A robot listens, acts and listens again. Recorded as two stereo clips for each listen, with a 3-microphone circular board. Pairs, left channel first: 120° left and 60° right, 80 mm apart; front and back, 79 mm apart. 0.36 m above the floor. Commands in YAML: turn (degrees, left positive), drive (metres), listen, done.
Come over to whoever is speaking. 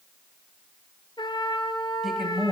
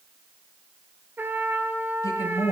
turn: 25
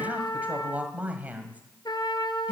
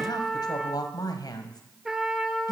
drive: 1.0
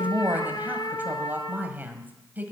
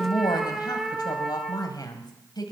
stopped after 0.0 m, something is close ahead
done: "Blocked. The woman speaking is further on, straight ahead."